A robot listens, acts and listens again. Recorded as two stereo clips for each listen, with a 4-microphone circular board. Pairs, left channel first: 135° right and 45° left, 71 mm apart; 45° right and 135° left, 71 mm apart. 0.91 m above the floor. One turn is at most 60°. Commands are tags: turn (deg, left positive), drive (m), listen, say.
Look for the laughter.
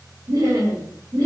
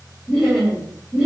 <turn deg="50"/>
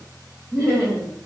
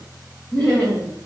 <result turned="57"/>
<turn deg="20"/>
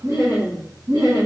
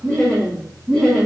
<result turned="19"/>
<turn deg="30"/>
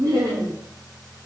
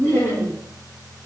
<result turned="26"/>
<turn deg="15"/>
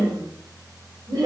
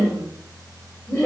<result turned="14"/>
<turn deg="20"/>
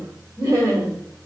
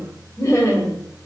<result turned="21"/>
<say>Found it: laughter, straight ahead, 1 to 2 m away.</say>